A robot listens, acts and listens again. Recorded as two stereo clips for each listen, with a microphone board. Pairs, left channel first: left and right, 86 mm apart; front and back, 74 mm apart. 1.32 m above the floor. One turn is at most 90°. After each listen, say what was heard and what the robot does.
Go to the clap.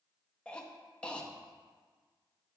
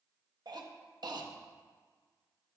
Keep listening.
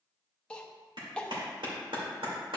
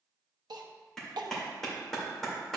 The clap: 85° right. Turn 85° right.
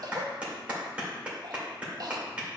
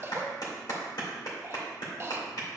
The clap is now 15° right. Turn 15° right.
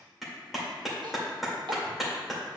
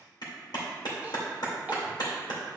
Drive 1.0 m forward.
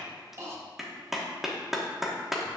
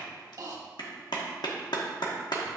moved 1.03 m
Drive 1.0 m forward.
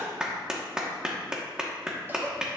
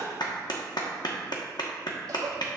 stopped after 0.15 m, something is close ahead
The clap is now 10° right. Turn 10° right.
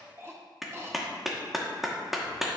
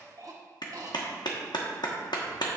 I am next to the clap.